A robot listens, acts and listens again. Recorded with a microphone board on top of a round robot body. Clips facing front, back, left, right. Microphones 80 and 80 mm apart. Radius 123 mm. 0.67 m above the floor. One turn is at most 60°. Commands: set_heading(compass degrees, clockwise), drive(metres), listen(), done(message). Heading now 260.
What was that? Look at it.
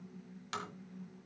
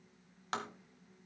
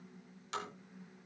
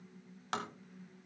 set_heading(320)
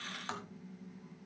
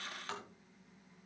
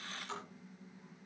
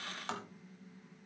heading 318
set_heading(18)
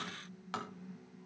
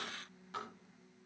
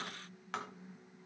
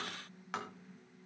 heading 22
done("Facing the tapping, 1 to 2 m away.")